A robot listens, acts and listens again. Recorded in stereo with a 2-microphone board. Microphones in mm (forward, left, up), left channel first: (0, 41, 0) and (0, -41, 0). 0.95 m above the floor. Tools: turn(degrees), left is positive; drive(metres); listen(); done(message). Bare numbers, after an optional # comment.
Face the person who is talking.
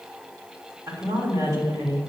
# The woman speaking: about 40° right or 140° right.
turn(-40)
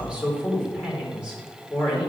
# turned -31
# So it is at 10° right.
turn(-10)
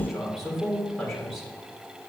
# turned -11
done("Found it: a woman speaking, straight ahead, 2 to 4 m away.")